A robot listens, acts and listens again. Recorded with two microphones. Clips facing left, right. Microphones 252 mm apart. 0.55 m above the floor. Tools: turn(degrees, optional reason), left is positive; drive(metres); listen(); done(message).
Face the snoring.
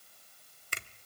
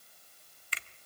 listen()
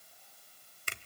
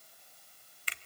listen()
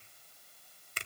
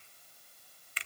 done("I can't make out snoring to turn to.")